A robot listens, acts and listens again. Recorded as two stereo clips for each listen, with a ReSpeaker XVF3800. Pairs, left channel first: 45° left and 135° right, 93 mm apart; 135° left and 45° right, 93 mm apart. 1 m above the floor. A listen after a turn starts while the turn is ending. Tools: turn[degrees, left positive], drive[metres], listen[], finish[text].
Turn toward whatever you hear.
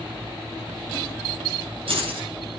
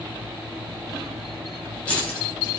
Thought: The keys jangling: 145° right.
Action: turn[-145]
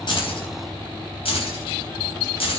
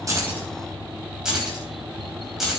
Thought: The keys jangling is now 40° left.
Action: turn[40]
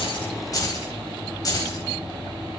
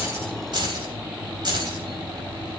Action: finish[Facing the keys jangling.]